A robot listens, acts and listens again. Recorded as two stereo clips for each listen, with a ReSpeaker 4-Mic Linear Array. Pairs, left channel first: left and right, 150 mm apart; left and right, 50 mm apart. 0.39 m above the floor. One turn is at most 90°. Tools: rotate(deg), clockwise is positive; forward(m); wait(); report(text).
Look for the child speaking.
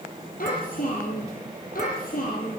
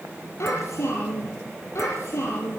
rotate(-70)
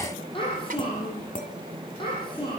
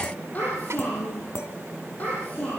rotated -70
rotate(-35)
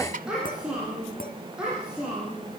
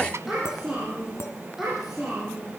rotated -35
report("Facing the child speaking.")